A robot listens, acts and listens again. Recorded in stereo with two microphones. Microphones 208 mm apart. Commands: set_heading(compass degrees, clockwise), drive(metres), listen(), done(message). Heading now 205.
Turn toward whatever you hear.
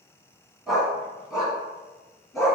set_heading(175)
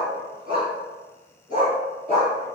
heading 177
set_heading(202)
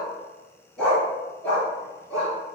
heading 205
done("Facing the dog barking.")